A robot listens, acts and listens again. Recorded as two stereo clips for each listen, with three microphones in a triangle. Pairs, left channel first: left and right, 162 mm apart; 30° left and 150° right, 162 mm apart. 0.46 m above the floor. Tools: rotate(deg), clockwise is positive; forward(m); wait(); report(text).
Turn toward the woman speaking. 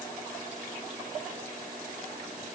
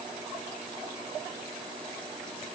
wait()
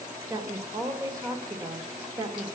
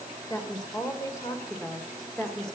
rotate(50)
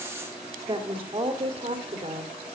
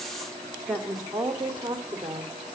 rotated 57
rotate(75)
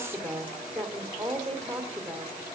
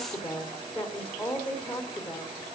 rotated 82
report("Facing the woman speaking, 1 to 2 m away.")